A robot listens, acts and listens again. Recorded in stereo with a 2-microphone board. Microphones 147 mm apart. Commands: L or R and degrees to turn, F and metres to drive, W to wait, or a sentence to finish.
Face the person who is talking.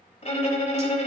W
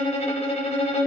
W
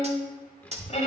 L30
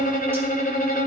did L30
W
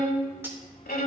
L140
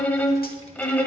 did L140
L45
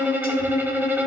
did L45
W
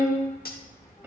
L20
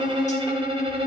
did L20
W
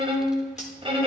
Found it: a child speaking, straight ahead.